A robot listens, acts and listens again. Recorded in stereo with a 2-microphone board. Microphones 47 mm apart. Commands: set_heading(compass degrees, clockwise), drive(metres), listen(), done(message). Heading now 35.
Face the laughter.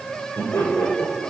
set_heading(340)
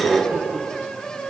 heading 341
done("Found it: laughter, straight ahead.")